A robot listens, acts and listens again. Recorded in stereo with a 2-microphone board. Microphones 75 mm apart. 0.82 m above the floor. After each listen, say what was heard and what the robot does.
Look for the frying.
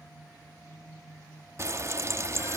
The frying: about 40° right or 140° right. Turn 40° right.
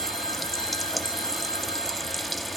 Facing the frying.